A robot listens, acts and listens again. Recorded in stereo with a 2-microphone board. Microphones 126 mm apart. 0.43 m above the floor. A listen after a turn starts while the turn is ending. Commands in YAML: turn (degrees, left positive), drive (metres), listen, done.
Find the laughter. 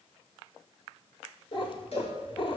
listen: true
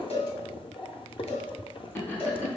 turn: 15
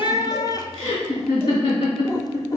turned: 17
turn: 140
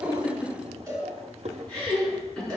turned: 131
done: "Facing the laughter, 2 to 4 m away."